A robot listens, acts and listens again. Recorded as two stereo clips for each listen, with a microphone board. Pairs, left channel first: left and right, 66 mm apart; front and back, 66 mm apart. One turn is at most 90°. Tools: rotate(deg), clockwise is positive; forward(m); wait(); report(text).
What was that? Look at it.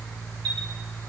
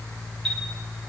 wait()
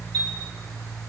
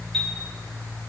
rotate(85)
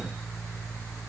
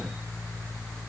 wait()
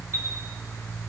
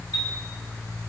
rotate(35)
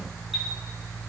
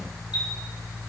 wait()
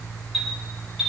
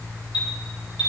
report("Facing the chime.")